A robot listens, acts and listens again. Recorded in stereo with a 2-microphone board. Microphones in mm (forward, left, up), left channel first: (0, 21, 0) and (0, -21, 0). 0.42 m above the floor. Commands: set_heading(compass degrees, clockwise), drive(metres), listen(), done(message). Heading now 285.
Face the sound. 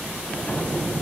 set_heading(250)
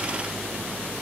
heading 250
listen()
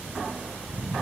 done("I heard an explosion, but can't make it out now. It was about straight ahead or 110° left.")